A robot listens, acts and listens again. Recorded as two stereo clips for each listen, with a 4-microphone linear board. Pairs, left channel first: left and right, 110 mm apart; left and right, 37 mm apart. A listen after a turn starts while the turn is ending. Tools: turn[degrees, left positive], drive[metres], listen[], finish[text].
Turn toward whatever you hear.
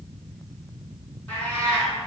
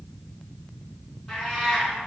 Action: turn[30]
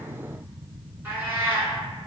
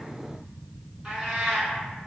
Thought: So it is at 20° right.
Action: turn[-20]
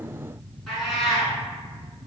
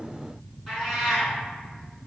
Action: finish[Facing the cat meowing.]